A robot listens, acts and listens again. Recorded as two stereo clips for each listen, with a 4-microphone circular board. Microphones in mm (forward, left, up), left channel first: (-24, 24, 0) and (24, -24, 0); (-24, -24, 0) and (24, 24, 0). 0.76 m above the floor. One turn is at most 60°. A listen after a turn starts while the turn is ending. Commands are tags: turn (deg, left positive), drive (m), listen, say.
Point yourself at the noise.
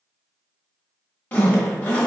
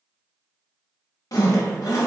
<turn deg="-60"/>
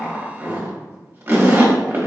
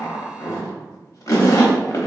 <turn deg="-60"/>
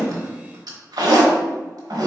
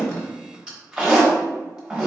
<turn deg="-35"/>
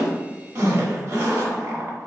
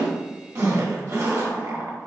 <say>Found it: a zipper, straight ahead, 1 to 2 m away.</say>